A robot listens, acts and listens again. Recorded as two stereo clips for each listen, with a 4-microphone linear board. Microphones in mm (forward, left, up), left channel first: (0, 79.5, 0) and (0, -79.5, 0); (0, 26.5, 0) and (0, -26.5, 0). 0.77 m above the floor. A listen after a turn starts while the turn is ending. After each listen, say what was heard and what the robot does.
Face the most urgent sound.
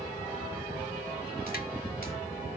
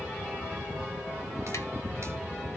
Keep listening.
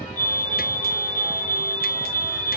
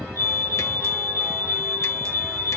The fire alarm: about 55° left or 125° left. Turn 55° left.
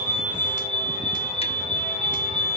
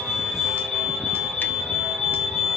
Facing the fire alarm, over 4 m away.